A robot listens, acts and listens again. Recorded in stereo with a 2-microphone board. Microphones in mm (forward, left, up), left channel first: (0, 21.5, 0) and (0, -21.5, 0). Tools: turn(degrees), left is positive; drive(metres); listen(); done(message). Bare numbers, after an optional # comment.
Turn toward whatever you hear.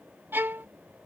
# The violin: about 55° right or 125° right.
turn(-55)
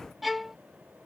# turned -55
done("Found it: a violin, straight ahead.")